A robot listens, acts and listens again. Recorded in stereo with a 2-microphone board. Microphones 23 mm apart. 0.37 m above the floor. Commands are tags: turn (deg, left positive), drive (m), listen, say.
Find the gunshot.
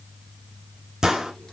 <turn deg="-25"/>
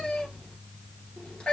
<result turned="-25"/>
<listen/>
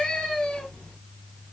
<say>I heard a gunshot, but can't make it out now. It was about straight ahead or 130° right.</say>